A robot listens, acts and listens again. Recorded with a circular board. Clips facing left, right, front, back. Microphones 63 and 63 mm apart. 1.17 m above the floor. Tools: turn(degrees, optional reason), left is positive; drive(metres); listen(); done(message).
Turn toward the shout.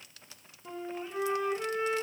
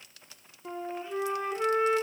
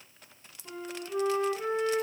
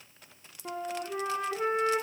listen()
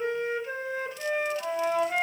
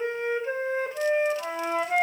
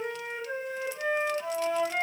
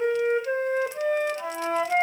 listen()
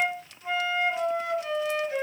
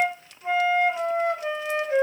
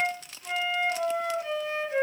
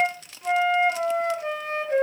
done("I can't make out a shout to turn to.")